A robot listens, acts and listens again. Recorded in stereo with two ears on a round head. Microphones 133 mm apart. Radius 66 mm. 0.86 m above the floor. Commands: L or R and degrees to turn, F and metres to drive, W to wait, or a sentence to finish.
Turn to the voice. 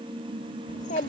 L55
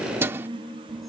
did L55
W
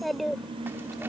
Found it: a child speaking, straight ahead.